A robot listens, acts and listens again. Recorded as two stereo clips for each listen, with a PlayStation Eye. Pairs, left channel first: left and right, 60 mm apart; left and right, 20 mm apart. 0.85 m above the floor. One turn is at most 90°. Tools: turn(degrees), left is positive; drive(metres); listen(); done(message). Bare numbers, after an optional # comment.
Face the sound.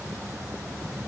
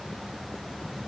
listen()
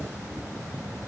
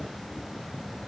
listen()
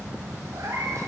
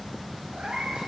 turn(-90)
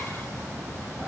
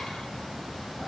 listen()
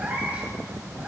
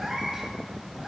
# The cat meowing is now 25° right.
turn(-25)
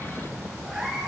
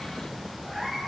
# The cat meowing is now 15° right.
turn(-15)
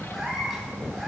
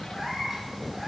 done("Found it: a cat meowing, straight ahead.")